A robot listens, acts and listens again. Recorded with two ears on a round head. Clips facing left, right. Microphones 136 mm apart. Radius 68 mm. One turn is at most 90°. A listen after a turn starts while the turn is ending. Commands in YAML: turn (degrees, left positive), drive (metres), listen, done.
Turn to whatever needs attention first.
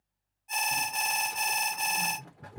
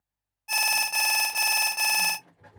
turn: -90
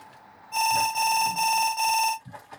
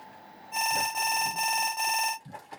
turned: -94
done: "Found it: an alarm, straight ahead, under 1 m away."